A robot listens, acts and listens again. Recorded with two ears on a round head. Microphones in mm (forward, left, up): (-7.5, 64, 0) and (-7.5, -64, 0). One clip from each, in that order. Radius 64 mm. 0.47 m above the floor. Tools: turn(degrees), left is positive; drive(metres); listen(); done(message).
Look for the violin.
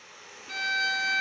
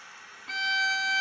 turn(degrees=-40)
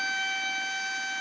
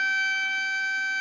done("Found it: a violin, straight ahead.")